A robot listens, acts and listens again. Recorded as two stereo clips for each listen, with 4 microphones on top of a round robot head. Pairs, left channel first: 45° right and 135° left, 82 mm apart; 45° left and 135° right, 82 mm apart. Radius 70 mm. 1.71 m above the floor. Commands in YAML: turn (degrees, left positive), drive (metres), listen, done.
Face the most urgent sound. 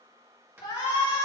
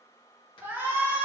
turn: -70
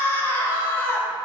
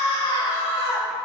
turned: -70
turn: 20
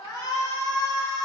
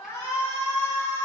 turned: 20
done: "Facing the shout, 2 to 4 m away."